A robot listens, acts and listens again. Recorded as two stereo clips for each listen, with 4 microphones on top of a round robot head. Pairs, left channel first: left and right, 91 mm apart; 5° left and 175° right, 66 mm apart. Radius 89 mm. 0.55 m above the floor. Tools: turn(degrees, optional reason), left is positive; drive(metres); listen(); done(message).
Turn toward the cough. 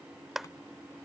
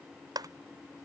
listen()
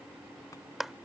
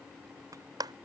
listen()
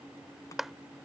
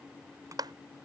done("I can't make out a cough, only a clap.")